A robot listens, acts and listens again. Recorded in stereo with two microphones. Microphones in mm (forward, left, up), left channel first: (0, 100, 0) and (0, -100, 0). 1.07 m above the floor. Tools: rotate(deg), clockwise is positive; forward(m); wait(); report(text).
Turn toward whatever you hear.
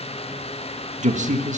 rotate(35)
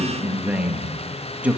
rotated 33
report("Facing the man speaking.")